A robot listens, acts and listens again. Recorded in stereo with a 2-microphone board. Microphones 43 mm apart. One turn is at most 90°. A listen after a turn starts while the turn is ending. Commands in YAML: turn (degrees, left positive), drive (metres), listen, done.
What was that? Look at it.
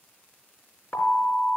turn: 60
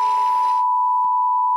done: "Facing the alarm, 2 to 4 m away."